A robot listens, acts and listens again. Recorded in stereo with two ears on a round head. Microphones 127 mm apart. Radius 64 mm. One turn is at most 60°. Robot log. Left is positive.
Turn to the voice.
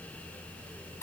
cmd idle
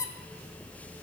cmd idle
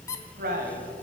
note: The man speaking: about 65° right or 115° right.
cmd yaw -60
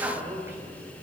note: So it is at 20° right.
cmd yaw -20
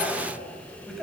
end: Facing the man speaking, 2 to 4 m away.